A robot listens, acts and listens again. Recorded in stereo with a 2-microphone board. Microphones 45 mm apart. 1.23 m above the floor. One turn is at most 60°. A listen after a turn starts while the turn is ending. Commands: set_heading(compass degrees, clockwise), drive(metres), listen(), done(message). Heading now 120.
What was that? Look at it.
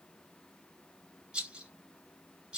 set_heading(140)
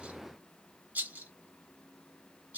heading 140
set_heading(200)
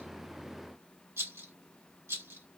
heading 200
set_heading(260)
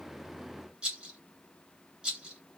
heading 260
set_heading(280)
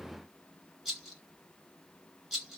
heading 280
done("Facing the rattle.")